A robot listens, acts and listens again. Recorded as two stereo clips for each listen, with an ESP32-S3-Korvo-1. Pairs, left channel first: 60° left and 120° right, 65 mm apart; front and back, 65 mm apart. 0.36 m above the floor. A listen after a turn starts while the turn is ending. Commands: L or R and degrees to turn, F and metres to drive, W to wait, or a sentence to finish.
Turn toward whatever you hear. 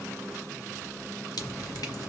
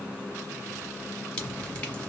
L70
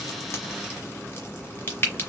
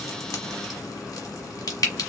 L10
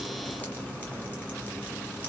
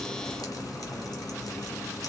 W
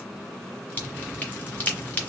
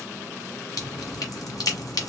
Facing the dripping.